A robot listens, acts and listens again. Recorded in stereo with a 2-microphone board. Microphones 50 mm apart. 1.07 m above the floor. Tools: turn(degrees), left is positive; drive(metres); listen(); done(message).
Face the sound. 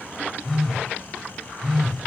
turn(degrees=30)
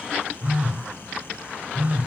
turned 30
turn(degrees=-25)
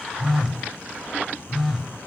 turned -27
done("Facing the phone buzzing.")